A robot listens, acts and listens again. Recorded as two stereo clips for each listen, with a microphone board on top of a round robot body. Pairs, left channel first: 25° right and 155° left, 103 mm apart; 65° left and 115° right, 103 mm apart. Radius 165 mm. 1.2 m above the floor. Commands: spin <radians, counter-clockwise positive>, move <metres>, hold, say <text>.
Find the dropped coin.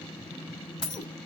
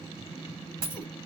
spin -1.31
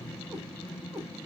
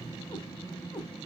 say Facing where the dropped coin came from. I can't hear it now.